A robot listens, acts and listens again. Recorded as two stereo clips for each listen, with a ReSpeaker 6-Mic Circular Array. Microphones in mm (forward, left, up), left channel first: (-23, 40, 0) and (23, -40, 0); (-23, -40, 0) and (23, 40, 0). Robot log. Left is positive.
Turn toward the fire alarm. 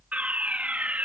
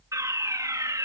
note: The fire alarm: 15° left.
cmd yaw +15
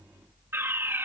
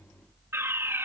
end: Found it: a fire alarm, straight ahead.